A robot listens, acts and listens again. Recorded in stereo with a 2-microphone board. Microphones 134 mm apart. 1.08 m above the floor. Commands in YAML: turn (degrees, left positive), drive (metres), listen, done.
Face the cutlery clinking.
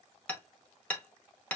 listen: true
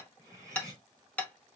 turn: -25
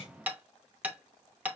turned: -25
done: "Found it: cutlery clinking, straight ahead."